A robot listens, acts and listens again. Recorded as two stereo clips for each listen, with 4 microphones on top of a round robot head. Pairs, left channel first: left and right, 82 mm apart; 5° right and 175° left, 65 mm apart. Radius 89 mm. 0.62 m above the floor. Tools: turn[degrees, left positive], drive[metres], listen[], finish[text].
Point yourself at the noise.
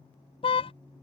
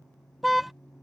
Thought: The car horn: 90° left.
Action: turn[90]
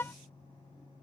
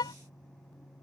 Thought: The car horn is now 20° left.
Action: turn[20]
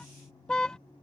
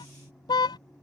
Thought: The car horn is now 10° left.
Action: turn[10]
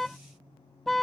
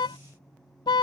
Action: finish[Facing the car horn.]